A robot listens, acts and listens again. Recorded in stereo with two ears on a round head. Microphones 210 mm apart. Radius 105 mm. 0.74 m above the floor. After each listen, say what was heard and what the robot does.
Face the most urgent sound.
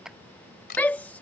Turn 30° left.
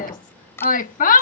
So it is at 140° left. Turn 140° left.
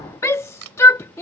The shout is now 15° left. Turn 15° left.
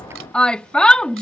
Facing the shout.